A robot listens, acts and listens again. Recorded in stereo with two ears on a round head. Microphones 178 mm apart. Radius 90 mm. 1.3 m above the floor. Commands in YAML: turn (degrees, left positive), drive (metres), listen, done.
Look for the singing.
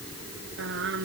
turn: -70
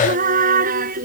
turn: -45
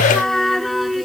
done: "Found it: singing, straight ahead."